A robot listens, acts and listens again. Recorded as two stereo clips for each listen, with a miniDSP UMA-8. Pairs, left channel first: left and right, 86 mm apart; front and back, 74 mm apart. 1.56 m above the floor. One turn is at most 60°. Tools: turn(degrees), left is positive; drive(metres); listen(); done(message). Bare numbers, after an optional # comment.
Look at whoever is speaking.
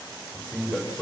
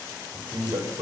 # The man speaking: 170° left.
turn(60)
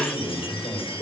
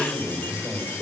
# The man speaking is now 110° left.
turn(60)
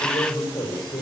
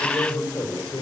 # The man speaking is now 50° left.
turn(50)
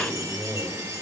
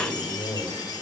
# The man speaking is now 10° left.
turn(10)
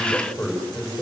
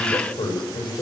done("Found it: a man speaking, straight ahead, over 4 m away.")